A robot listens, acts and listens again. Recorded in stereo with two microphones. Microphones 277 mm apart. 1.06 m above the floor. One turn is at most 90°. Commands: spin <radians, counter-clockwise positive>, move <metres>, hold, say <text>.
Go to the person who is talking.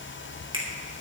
hold
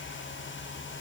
hold
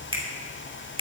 say I can't make out anyone speaking to turn to.